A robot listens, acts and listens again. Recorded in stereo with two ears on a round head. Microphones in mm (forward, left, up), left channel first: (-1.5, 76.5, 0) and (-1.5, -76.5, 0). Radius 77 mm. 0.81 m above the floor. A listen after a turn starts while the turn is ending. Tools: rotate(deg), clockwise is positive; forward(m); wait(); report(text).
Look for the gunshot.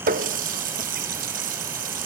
wait()
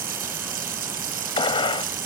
rotate(-30)
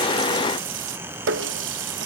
wait()
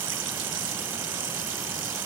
report("I heard a gunshot, but can't make it out now. It was about straight ahead or 120° left.")